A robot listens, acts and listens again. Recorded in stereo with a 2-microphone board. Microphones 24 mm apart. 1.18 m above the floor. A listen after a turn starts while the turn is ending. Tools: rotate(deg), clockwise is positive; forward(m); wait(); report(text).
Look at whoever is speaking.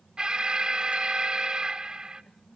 wait()
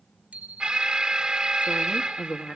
rotate(-90)
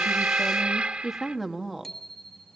report("Facing the woman speaking, 2 to 4 m away.")